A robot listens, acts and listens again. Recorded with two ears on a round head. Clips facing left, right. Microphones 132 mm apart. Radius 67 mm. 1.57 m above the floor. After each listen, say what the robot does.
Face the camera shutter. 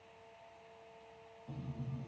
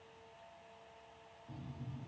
Keep listening.
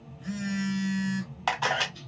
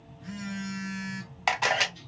Turn 30° right.
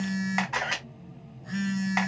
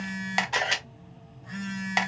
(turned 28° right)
Turn 145° right.
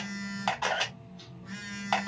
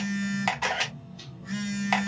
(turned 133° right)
Turn 10° right.
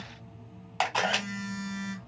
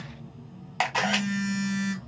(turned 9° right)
Facing the camera shutter, under 1 m away.